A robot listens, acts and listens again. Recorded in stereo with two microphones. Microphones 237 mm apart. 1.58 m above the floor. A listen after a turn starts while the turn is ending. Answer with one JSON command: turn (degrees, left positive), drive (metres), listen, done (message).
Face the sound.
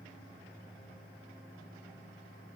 {"listen": true}
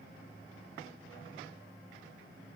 {"listen": true}
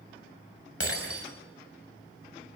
{"turn": 70}
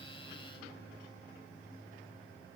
{"listen": true}
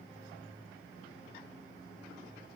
{"done": "I heard breaking glass, but can't make it out now. It was about straight ahead or 40° left."}